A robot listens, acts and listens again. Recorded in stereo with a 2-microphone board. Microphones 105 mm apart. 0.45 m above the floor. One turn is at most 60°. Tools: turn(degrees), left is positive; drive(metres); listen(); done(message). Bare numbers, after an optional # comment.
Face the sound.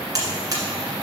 # The buzzer: about 40° right or 140° right.
turn(-40)
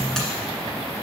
listen()
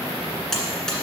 done("Found it: a buzzer, straight ahead, 1 to 2 m away.")